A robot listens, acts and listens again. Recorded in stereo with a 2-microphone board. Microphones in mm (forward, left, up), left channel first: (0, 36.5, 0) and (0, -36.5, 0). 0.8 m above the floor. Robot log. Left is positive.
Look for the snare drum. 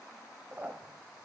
cmd idle
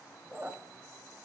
cmd idle
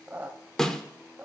cmd yaw +30
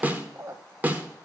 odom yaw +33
note: So it is at 25° right.
cmd yaw -25
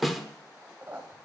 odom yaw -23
end: Found it: a snare drum, straight ahead, 1 to 2 m away.